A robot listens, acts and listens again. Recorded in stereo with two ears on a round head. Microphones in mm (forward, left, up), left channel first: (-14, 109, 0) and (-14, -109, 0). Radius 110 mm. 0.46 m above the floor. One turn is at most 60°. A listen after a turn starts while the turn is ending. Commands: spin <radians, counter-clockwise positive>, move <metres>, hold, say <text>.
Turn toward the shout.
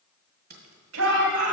spin -1.05
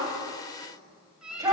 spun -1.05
spin -0.26
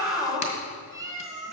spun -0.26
say Facing the shout.